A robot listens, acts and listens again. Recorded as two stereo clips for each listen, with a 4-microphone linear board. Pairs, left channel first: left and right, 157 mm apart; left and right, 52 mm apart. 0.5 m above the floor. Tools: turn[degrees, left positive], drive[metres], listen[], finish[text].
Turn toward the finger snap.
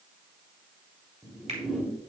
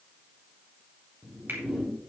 Thought: The finger snap: about 45° right or 135° right.
Action: turn[-45]
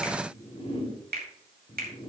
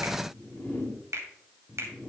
Thought: So it is at 85° right.
Action: turn[-85]
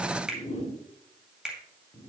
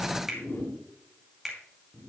Action: finish[Found it: a finger snap, straight ahead.]